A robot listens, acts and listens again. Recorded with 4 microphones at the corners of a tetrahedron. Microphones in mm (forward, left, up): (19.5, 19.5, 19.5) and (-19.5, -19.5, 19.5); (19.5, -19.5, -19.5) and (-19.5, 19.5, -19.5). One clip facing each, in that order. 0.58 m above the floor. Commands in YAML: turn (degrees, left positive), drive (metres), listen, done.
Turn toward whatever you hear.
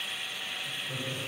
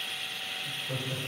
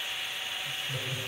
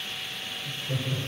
turn: 160
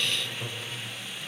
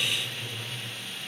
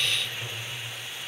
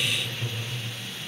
turn: 30
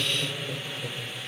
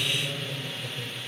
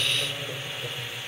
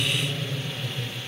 turn: -20
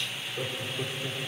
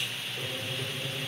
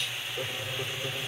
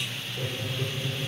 turn: -10
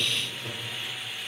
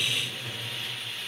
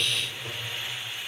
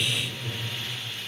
done: "Found it: laughter, straight ahead."